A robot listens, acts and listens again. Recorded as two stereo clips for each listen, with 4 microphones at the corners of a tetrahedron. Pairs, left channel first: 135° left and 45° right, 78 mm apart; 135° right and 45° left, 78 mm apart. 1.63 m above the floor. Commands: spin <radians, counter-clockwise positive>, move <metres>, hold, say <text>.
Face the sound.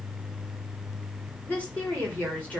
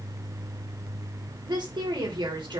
spin 1.13
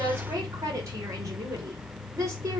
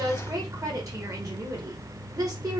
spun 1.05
say Found it: a woman speaking, straight ahead, over 4 m away.